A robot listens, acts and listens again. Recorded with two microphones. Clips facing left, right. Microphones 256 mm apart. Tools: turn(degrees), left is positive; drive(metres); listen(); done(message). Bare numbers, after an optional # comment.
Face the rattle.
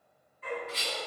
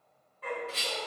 # The rattle: about 50° right or 130° right.
turn(-50)
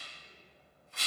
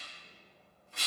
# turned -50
# So it is at 80° right.
turn(-80)
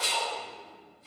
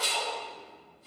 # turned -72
# The rattle is now 10° right.
turn(-10)
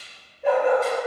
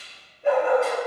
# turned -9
listen()
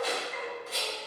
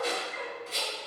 done("Facing the rattle.")